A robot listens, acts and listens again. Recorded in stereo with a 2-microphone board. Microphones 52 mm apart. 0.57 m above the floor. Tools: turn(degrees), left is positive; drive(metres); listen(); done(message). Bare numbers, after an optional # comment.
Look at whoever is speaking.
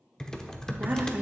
# The woman speaking: about 35° right or 145° right.
turn(-35)
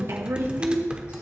# So it is at 105° right.
turn(-105)
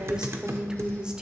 # The woman speaking is now 20° right.
turn(-20)
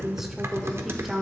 # The woman speaking is now 10° right.
turn(-10)
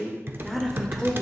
done("Found it: a woman speaking, straight ahead, 1 to 2 m away.")